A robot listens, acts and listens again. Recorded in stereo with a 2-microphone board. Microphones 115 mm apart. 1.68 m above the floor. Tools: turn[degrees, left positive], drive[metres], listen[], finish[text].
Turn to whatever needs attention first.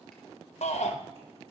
Action: turn[90]
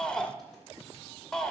Action: finish[Found it: a shout, straight ahead.]